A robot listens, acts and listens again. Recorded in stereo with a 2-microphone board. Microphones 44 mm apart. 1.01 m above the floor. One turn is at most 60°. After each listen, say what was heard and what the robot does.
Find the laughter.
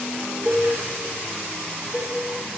Keep listening.
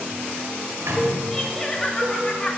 The laughter: about 20° left or 160° left. Turn 20° left.
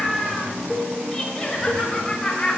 The laughter: about 20° left or 160° left. Turn 20° left.
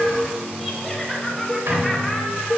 Found it: laughter, straight ahead, 2 to 4 m away.